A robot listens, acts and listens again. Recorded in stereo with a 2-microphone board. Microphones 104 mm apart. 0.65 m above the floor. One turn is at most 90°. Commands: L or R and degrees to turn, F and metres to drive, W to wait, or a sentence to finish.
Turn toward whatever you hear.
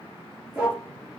R30
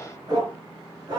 R90
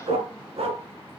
R80
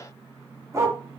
R25
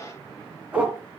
R15
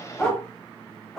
Found it: a dog barking, straight ahead, 2 to 4 m away.